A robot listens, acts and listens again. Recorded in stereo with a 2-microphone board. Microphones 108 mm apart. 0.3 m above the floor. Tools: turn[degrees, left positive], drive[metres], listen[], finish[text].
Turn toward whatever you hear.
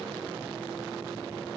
Action: listen[]
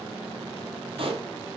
Thought: The pop: about 60° right or 120° right.
Action: turn[-60]
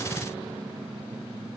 Action: listen[]
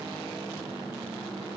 Action: finish[I heard a pop, but can't make it out now. It was about straight ahead or 60° right.]